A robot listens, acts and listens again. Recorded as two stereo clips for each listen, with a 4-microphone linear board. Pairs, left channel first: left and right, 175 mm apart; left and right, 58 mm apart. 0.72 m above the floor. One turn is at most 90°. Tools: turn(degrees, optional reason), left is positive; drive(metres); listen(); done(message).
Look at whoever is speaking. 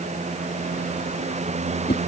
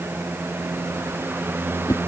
listen()
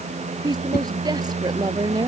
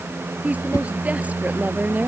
turn(degrees=-20, reason="The woman speaking: about 20° right or 160° right.")
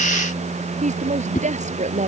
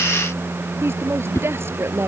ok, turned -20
turn(degrees=-90, reason="So it is at 140° right.")
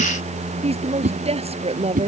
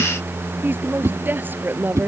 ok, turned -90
turn(degrees=-35, reason="The woman speaking is now 35° right.")
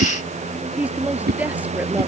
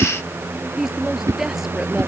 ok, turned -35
turn(degrees=-10, reason="The woman speaking is now 10° right.")
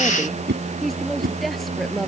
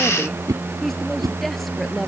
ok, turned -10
done("Found it: a woman speaking, straight ahead.")